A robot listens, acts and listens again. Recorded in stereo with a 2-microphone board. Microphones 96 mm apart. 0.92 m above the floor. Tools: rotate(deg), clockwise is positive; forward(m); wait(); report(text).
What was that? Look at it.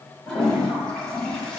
rotate(-30)
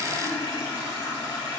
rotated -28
rotate(-145)
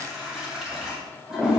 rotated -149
report("Facing the toilet flushing.")